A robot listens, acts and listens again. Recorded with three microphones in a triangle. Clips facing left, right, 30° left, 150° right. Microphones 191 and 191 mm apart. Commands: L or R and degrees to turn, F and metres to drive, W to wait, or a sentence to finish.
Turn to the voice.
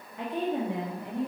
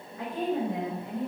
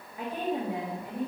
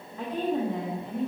L110
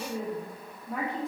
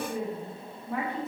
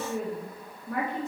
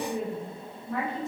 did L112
Facing the woman speaking.